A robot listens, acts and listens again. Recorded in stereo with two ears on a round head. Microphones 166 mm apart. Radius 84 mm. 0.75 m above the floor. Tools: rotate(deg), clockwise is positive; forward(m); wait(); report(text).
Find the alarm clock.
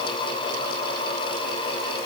wait()
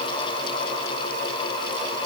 wait()
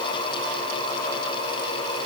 report("I can't make out an alarm clock.")